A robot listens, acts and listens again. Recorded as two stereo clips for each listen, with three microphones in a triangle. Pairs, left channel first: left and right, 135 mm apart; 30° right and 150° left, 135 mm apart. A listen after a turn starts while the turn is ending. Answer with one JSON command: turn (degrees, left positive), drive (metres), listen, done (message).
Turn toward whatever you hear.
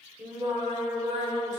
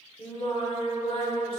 {"turn": -75}
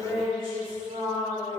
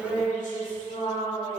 {"turn": -60}
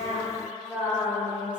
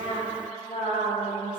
{"turn": -10}
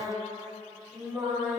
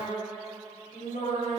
{"turn": -15}
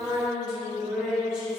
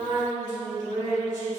{"done": "Facing the singing, 2 to 4 m away."}